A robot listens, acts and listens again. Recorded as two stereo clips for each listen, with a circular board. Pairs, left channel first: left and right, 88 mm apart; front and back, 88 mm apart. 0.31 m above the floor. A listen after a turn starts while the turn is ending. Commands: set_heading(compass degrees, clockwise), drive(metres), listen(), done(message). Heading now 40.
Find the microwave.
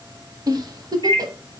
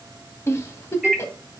set_heading(130)
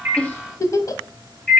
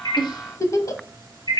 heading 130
set_heading(120)
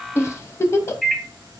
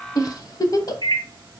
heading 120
done("Found it: a microwave, straight ahead, 1 to 2 m away.")